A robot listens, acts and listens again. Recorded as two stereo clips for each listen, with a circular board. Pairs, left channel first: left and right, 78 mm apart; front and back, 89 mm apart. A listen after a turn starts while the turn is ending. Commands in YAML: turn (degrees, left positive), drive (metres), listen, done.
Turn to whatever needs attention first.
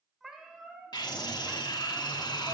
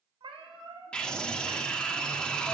turn: 80
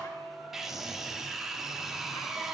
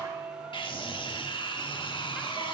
done: "Found it: a scream, straight ahead."